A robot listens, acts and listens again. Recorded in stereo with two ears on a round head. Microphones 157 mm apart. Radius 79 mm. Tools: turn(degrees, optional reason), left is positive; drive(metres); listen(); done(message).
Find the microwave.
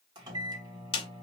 turn(degrees=-25, reason="The microwave: about 25° right or 155° right.")
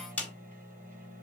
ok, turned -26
turn(degrees=-130, reason="So it is at 130° right.")
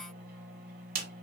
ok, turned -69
turn(degrees=-60, reason="The microwave is now 60° right.")
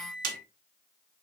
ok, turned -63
done("Found it: a microwave, straight ahead.")